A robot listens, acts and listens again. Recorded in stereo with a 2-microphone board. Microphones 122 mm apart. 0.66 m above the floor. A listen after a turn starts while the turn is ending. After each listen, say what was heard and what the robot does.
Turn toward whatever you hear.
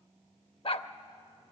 The dog barking: about 50° left or 130° left. Turn 50° left.
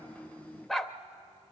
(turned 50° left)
Found it: a dog barking, straight ahead.